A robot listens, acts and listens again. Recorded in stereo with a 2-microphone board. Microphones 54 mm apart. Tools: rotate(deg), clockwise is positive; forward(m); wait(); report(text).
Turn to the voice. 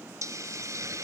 wait()
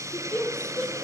rotate(-15)
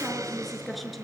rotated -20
report("Found it: a woman speaking, straight ahead.")